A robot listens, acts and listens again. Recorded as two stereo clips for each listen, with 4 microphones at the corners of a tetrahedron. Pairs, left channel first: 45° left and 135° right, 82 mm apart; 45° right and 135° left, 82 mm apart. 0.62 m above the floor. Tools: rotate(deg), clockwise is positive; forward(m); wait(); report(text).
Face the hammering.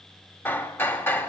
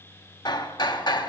rotate(20)
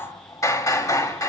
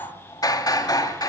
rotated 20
report("Facing the hammering, 1 to 2 m away.")